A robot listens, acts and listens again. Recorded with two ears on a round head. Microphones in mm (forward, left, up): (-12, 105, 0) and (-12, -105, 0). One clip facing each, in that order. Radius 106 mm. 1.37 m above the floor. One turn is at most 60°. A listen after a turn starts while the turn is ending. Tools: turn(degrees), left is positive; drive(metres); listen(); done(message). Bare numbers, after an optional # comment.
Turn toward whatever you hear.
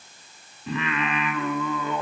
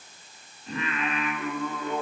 # The singing: about 55° left or 125° left.
turn(55)
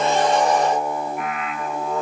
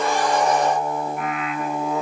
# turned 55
done("Found it: singing, straight ahead, 2 to 4 m away.")